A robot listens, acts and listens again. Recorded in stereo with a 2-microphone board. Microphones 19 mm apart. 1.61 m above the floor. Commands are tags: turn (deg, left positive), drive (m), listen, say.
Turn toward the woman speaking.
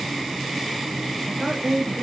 <turn deg="-35"/>
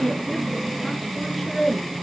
<say>Found it: a woman speaking, straight ahead.</say>